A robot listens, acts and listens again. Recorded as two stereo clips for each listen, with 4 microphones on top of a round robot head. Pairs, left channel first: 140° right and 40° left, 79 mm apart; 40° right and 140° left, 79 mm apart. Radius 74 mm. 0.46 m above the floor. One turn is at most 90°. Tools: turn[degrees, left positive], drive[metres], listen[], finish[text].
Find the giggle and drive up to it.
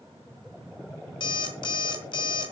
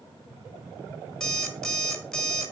Action: listen[]
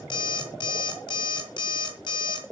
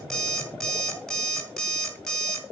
Action: listen[]
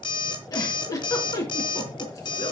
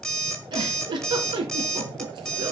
Thought: The giggle: 170° left.
Action: turn[90]
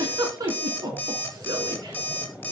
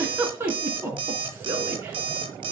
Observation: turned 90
Thought: The giggle is now 80° left.
Action: turn[80]
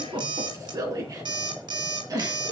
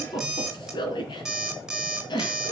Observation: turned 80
Thought: The giggle is now 10° right.
Action: turn[-10]
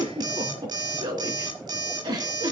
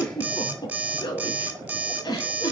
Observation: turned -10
Action: drive[1.0]
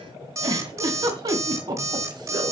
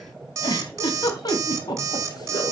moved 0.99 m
Action: drive[1.0]
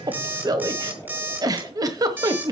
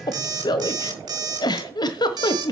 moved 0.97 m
Action: drive[1.0]
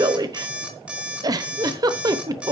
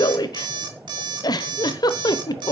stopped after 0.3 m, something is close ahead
Action: finish[I am next to the giggle.]